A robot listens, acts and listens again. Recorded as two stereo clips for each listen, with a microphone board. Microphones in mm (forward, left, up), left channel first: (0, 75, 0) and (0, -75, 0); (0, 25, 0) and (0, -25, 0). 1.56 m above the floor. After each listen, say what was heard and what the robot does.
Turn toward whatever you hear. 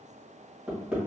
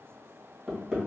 Turn 30° right.
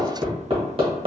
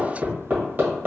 So it is at 140° right. Turn 140° right.
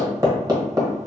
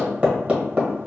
The hammering is now 30° right. Turn 30° right.
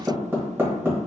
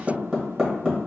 The hammering is now 15° right. Turn 15° right.
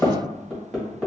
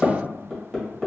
Facing the hammering, 1 to 2 m away.